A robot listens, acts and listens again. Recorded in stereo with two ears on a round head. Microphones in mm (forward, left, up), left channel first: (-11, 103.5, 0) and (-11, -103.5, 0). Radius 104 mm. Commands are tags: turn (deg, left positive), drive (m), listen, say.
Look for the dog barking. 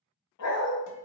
<turn deg="90"/>
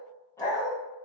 <turn deg="15"/>
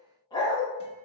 <turn deg="20"/>
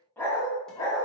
<turn deg="15"/>
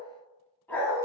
<turn deg="10"/>
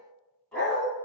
<say>Facing the dog barking.</say>